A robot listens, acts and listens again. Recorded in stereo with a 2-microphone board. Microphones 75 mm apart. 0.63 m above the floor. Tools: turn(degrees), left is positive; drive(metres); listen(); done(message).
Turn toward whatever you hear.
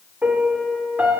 turn(degrees=-20)
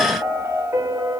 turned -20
turn(degrees=-140)
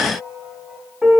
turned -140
turn(degrees=-15)
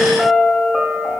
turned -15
done("Facing the piano, 1 to 2 m away.")